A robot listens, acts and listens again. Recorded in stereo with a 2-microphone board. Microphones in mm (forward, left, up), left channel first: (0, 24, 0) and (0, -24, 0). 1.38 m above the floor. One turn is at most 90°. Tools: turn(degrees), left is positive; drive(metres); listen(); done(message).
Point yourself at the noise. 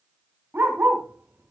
turn(degrees=-45)
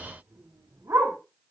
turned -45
turn(degrees=-90)
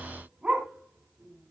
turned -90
turn(degrees=-20)
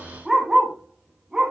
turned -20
turn(degrees=-15)
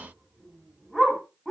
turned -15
done("Found it: a dog barking, straight ahead, over 4 m away.")